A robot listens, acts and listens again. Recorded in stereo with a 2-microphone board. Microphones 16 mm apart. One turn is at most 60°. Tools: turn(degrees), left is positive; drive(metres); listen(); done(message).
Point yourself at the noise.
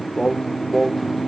turn(degrees=-30)
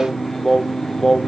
turn(degrees=30)
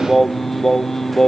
turn(degrees=25)
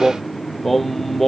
turn(degrees=15)
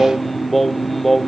turn(degrees=10)
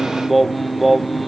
done("Found it: singing, straight ahead.")